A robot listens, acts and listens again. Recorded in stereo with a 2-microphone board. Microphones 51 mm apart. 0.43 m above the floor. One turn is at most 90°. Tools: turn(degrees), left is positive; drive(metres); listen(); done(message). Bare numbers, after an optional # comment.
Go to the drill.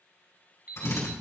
# The drill: about 65° left or 115° left.
turn(65)
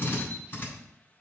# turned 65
# So it is at 40° left.
turn(40)
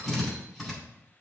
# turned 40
drive(1.0)
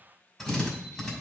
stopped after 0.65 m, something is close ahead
done("Something is in my way. I am facing the drill but have not reached it.")